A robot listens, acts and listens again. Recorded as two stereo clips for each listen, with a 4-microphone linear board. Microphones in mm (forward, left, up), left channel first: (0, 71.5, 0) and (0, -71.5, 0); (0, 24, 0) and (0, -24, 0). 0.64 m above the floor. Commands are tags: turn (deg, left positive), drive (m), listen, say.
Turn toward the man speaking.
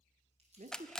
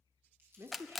<turn deg="-60"/>
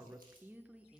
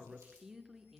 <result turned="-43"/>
<say>Found it: a man speaking, straight ahead.</say>